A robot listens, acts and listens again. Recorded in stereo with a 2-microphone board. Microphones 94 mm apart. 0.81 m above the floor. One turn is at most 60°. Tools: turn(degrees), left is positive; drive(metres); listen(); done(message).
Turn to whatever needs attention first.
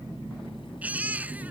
turn(degrees=-15)
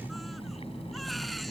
listen()
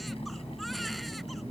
listen()
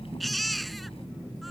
done("Found it: a baby crying, straight ahead.")